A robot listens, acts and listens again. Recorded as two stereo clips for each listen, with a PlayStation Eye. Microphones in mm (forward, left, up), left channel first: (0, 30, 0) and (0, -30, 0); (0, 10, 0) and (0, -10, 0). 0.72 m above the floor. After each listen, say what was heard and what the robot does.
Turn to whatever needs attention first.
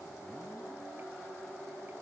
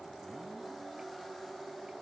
Keep listening.
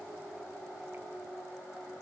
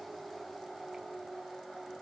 Keep listening.
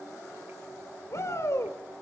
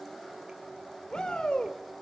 The shout: about 50° left or 130° left. Turn 50° left.
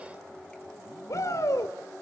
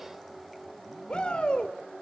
So it is at 75° left. Turn 75° left.
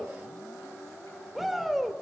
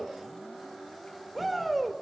Found it: a shout, straight ahead, 2 to 4 m away.